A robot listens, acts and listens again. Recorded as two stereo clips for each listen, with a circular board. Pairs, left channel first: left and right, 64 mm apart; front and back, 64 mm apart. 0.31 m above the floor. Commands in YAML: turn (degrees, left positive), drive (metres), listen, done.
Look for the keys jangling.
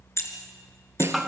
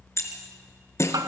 turn: 45
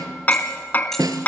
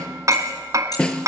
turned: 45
listen: true
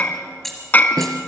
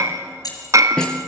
done: "Found it: keys jangling, straight ahead, over 4 m away."